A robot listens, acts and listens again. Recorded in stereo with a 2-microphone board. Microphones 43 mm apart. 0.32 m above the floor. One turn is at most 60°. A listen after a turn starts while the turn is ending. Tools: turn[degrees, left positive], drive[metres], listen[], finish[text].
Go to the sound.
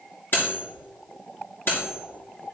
Thought: The cutlery clinking: about 55° left or 125° left.
Action: turn[55]
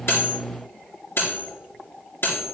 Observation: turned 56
Thought: So it is at 65° left.
Action: turn[60]
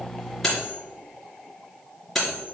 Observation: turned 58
Thought: The cutlery clinking is now 10° left.
Action: turn[10]
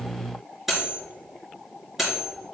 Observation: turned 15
Action: drive[1.0]
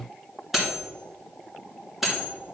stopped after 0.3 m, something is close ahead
Action: finish[Something is in my way. I am facing the cutlery clinking but have not reached it.]